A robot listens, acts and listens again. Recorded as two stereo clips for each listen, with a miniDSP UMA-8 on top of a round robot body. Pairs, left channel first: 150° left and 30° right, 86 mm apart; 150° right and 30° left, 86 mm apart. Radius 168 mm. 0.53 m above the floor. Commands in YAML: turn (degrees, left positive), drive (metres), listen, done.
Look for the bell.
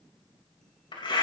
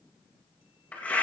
listen: true
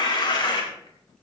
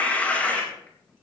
listen: true
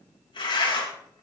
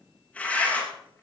done: "I can't make out a bell to turn to."